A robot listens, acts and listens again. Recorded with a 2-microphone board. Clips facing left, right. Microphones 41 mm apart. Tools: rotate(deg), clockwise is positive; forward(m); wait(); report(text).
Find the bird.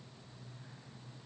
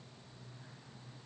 wait()
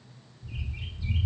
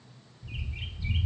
rotate(90)
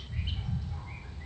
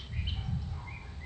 rotate(10)
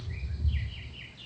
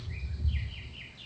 report("Facing the bird.")